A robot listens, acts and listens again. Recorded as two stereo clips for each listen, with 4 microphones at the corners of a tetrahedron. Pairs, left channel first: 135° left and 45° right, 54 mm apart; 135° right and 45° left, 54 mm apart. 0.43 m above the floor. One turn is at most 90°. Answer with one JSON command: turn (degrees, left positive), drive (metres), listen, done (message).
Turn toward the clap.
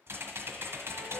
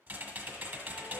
{"listen": true}
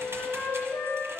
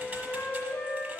{"listen": true}
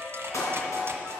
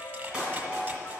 {"turn": 90}
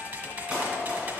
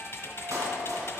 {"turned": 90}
{"turn": 30}
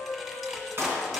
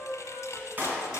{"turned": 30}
{"done": "Found it: a clap, straight ahead, 2 to 4 m away."}